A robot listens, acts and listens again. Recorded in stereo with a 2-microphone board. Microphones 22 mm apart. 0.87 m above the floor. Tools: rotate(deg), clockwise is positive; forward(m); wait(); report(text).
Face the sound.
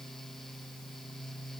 wait()
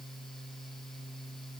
wait()
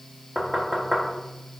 rotate(-30)
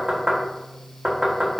rotate(30)
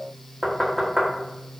report("Found it: knocking, straight ahead, 1 to 2 m away.")